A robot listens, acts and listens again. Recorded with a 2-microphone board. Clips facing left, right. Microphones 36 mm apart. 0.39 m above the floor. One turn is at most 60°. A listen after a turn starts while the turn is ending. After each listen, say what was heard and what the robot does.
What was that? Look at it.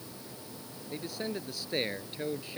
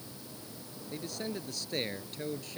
The man speaking: about 20° left or 160° left. Turn 20° left.
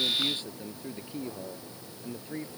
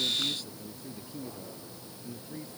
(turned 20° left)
So it is at 140° left. Turn 60° left.
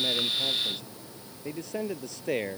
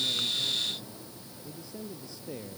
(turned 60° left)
The man speaking is now 70° left. Turn 60° left.
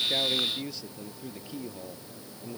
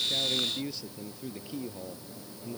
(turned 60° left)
Found it: a man speaking, straight ahead.